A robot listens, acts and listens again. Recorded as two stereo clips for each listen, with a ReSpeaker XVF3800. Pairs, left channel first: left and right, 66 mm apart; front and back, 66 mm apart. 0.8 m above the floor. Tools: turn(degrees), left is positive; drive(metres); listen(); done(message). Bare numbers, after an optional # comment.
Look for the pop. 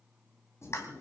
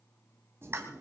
# The pop: 130° left.
turn(130)
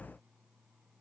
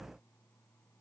done("I heard a pop from this way, but can't make it out now.")